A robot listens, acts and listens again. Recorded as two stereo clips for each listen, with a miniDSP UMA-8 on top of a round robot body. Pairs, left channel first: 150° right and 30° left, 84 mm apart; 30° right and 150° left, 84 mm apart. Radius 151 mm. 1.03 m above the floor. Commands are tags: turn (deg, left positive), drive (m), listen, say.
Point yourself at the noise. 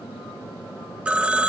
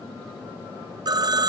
<turn deg="105"/>
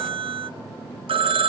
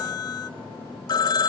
<turn deg="15"/>
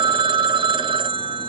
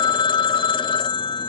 <say>Facing the phone ringing.</say>